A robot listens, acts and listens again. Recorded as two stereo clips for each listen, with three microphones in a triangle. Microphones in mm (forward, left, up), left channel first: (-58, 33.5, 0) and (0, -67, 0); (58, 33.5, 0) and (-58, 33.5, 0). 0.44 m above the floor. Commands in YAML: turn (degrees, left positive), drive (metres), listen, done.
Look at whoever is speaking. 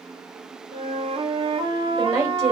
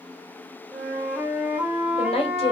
done: "Found it: a woman speaking, straight ahead, 1 to 2 m away."